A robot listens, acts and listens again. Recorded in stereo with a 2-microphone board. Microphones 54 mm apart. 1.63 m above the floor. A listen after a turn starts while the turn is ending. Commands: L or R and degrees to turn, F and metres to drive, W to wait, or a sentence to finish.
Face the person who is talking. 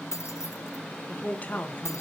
L30
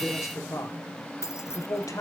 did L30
L95
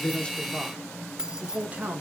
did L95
R25
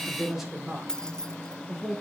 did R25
R10
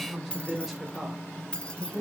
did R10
Found it: a man speaking, straight ahead, 2 to 4 m away.